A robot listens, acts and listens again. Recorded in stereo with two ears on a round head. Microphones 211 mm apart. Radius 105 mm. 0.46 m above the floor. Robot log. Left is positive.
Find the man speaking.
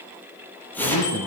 cmd yaw +90
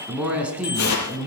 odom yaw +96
end: Facing the man speaking.